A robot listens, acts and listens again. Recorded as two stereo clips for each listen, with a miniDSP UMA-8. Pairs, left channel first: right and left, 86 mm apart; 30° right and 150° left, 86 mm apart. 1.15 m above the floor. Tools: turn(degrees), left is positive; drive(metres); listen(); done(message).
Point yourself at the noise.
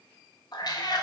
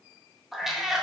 turn(degrees=-125)
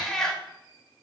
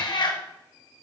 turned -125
done("Found it: a cat meowing, straight ahead, 1 to 2 m away.")